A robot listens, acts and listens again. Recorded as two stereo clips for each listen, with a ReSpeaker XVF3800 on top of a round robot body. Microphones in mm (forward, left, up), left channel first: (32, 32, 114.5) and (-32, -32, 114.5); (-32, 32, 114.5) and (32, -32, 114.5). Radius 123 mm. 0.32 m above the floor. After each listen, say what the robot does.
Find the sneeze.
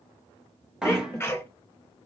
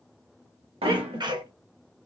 Turn 20° right.
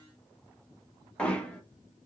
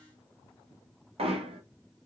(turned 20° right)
Facing where the sneeze came from. I can't hear it now.